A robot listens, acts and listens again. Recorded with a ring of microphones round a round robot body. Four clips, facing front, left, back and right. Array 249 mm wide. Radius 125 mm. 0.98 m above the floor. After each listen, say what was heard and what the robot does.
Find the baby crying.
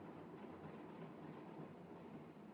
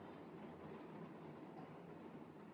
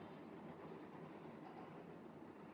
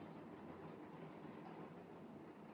Keep listening.
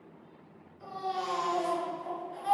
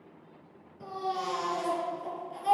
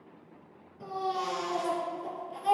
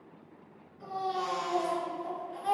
The baby crying: 135° left. Turn 135° left.
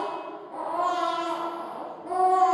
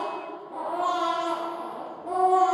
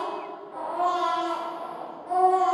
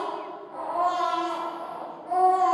The baby crying is now 55° left. Turn 55° left.
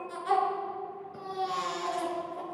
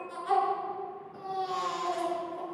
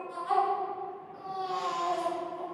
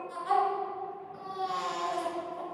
Found it: a baby crying, straight ahead.